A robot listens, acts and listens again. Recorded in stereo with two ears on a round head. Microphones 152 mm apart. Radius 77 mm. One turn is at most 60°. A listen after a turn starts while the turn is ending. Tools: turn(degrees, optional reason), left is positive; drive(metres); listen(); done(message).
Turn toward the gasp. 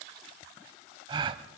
turn(degrees=-30, reason="The gasp: about 30° right or 150° right.")
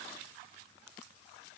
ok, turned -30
listen()
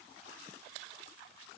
done("I heard a gasp, but can't make it out now. It was about straight ahead or 120° right.")